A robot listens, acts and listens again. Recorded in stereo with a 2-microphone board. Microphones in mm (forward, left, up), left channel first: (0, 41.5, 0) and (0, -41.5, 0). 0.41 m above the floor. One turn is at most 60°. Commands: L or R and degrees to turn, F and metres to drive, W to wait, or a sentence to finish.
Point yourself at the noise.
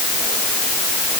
W
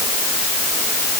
W
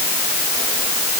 I can't make out anything to turn to.